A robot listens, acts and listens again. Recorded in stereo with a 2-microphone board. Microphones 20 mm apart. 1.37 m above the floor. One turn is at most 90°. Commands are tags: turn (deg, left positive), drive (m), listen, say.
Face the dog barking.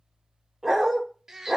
<turn deg="-20"/>
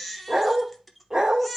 <turn deg="-90"/>
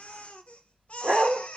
<turn deg="-55"/>
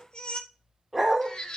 <say>Facing the dog barking.</say>